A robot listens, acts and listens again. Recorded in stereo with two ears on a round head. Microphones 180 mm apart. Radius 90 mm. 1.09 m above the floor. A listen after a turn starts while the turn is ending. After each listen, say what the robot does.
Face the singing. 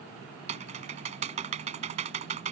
Keep listening.
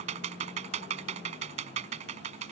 Keep listening.
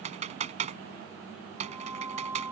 Turn 30° right.
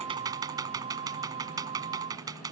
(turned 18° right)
Turn 30° right.
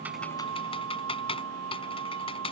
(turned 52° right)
Turn 100° right.
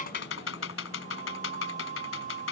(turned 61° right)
Turn 40° right.
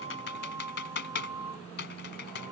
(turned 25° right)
Turn 15° right.
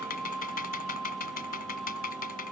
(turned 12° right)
Facing the singing.